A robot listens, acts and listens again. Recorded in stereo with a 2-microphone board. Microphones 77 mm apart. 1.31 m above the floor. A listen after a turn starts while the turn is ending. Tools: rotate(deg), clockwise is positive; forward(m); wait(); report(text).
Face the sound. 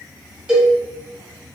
rotate(30)
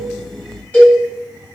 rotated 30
rotate(-20)
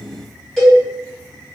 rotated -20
report("Facing the cowbell.")